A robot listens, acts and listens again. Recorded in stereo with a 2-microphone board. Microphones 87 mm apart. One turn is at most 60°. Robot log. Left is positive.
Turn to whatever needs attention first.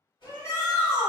note: The shout: about 30° left or 150° left.
cmd yaw +30
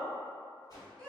note: So it is at 10° left.
cmd yaw +10
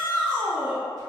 end: Found it: a shout, straight ahead.